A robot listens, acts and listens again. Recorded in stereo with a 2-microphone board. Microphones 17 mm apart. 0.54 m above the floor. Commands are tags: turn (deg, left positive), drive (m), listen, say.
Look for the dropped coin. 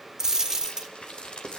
<turn deg="-25"/>
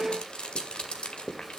<listen/>
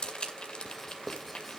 <say>I heard a dropped coin, but can't make it out now. It was about straight ahead or 130° right.</say>